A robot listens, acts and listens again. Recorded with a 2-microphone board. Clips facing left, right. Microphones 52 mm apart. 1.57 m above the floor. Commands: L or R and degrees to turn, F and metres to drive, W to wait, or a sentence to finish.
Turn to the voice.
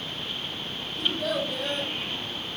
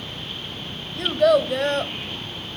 R70
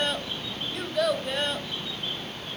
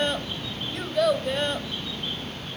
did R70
Found it: a child speaking, straight ahead, 1 to 2 m away.